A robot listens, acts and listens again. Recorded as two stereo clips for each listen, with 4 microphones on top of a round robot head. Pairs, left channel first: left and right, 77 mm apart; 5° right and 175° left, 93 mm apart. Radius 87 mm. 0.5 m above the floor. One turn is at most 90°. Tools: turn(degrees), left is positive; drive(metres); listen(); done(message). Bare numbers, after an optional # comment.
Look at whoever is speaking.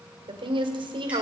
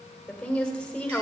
# The woman speaking: 85° right.
turn(-85)
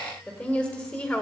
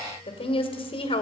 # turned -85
# The woman speaking is now 10° left.
turn(10)
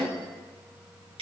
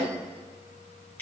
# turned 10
done("Found it: a woman speaking, straight ahead.")